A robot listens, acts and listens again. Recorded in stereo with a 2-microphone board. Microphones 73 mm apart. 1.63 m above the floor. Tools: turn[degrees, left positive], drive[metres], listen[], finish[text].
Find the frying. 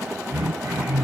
Action: listen[]
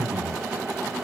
Action: listen[]
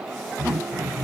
Action: finish[I can't make out frying, only throat clearing.]